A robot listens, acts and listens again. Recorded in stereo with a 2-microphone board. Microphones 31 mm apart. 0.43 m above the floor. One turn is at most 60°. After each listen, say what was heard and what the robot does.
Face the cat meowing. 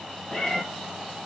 Turn 30° left.
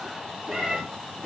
So it is at 35° right. Turn 35° right.
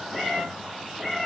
Facing the cat meowing, 2 to 4 m away.